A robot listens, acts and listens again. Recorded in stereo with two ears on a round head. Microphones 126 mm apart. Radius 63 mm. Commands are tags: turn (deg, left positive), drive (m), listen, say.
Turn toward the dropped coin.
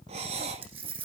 <turn deg="-45"/>
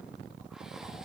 <listen/>
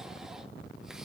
<say>I heard a dropped coin, but can't make it out now. It was about straight ahead or 90° right.</say>